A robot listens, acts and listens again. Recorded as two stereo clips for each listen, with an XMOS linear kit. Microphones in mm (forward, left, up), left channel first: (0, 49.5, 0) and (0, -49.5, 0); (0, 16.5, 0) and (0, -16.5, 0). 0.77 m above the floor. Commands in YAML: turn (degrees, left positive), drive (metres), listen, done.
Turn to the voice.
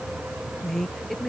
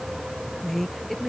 turn: 30
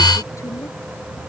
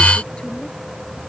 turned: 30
listen: true
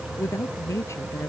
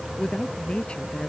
turn: 145
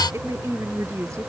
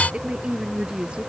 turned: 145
turn: -35
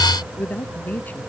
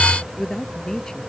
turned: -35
turn: 20
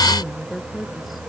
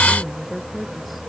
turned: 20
done: "Facing the woman speaking."